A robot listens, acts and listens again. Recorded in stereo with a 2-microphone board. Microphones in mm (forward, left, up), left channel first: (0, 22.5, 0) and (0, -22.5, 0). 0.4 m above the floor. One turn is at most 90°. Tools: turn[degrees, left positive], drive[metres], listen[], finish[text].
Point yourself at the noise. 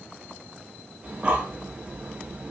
Thought: The breathing: about 25° right or 155° right.
Action: turn[-25]
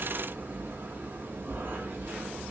Thought: So it is at 125° right.
Action: turn[-90]
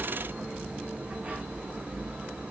Thought: The breathing is now 35° right.
Action: turn[-35]
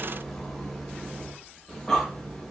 Thought: The breathing is now 10° left.
Action: turn[10]
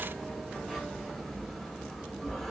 Action: finish[Found it: breathing, straight ahead, under 1 m away.]